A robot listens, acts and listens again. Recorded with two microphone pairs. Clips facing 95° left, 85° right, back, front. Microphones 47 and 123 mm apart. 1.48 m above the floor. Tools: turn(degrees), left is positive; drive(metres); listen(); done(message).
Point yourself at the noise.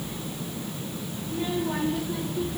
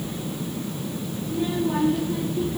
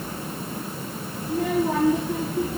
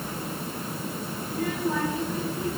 turn(degrees=-165)
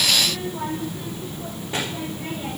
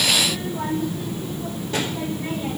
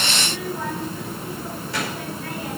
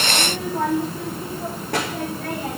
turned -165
turn(degrees=30)
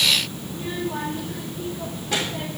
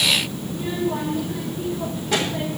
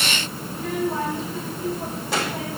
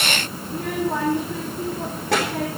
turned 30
done("Found it: a child speaking, straight ahead, over 4 m away.")